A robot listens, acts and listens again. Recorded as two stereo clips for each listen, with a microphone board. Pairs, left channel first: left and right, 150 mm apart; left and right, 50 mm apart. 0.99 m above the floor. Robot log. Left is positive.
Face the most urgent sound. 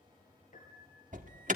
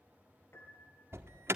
note: The alarm: about 55° right or 125° right.
cmd yaw -55
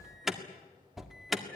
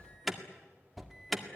end: Found it: an alarm, straight ahead.